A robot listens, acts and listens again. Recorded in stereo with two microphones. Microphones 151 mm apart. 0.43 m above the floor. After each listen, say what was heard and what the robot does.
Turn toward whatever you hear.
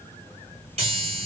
The chime: about 45° right or 135° right. Turn 45° right.
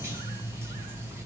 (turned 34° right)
So it is at 20° right. Turn 20° right.
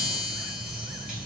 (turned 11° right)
Found it: a chime, straight ahead.